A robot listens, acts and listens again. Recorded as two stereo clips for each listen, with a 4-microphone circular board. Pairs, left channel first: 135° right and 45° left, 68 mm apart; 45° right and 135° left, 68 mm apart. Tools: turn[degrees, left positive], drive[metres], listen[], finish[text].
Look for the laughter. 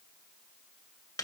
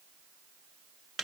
Action: listen[]
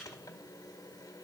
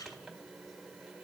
Action: listen[]
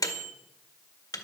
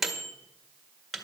Action: finish[I can't make out laughter to turn to.]